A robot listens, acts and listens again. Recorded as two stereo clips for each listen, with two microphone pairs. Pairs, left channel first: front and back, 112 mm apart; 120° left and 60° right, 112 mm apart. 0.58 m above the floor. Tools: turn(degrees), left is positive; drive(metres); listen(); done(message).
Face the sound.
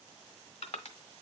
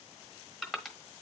turn(degrees=30)
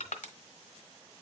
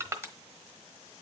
done("Facing the crushing.")